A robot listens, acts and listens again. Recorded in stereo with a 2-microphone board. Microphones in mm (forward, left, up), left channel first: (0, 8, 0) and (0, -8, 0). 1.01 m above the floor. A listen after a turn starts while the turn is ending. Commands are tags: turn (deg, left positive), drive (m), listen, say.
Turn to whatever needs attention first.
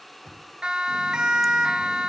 <turn deg="-75"/>
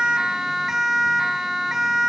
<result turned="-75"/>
<turn deg="-30"/>
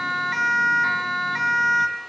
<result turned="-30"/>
<say>Facing the siren.</say>